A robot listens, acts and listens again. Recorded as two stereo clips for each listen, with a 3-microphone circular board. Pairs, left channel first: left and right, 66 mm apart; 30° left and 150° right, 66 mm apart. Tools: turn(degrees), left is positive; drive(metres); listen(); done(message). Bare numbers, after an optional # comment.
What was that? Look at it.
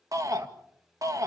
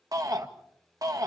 # The shout: 125° right.
turn(-125)
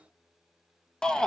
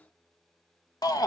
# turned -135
# The shout is now 10° left.
turn(10)
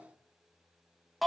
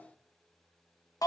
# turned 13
done("Found it: a shout, straight ahead, 1 to 2 m away.")